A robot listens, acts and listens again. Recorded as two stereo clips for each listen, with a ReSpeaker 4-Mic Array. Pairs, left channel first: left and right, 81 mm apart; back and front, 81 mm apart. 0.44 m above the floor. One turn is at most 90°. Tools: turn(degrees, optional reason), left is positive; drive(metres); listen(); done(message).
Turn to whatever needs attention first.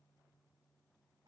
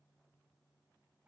listen()
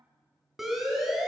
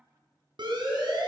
done("Facing the siren.")